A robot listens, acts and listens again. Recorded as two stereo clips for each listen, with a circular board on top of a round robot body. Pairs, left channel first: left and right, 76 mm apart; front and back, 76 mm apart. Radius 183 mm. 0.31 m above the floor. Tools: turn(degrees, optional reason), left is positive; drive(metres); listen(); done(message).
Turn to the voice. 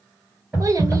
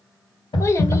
turn(degrees=-50, reason="The child speaking: 50° right.")
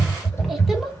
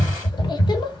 done("Facing the child speaking.")